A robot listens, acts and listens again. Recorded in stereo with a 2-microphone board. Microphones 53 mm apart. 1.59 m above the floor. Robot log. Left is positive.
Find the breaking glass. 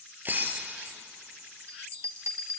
note: The breaking glass: about 40° right or 140° right.
cmd yaw -40
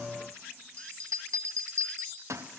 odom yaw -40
cmd idle
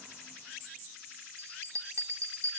end: I heard breaking glass, but can't make it out now. It was about straight ahead or 100° right.